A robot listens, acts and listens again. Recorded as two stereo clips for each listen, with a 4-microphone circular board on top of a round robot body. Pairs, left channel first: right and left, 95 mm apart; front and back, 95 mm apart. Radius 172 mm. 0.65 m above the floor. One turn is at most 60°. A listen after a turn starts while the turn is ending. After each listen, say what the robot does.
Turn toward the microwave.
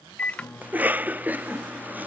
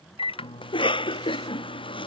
Turn 15° right.
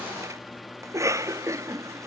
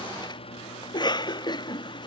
Facing the microwave.